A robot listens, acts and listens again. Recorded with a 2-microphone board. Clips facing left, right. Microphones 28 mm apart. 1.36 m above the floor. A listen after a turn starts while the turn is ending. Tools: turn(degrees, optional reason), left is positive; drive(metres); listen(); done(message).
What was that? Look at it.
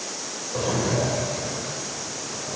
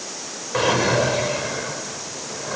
turn(degrees=-65, reason="The drawer: about 65° right or 115° right.")
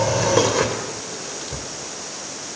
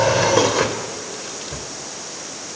turn(degrees=-10, reason="So it is at 10° right.")
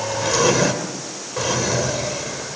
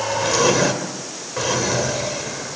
done("Facing the drawer, 2 to 4 m away.")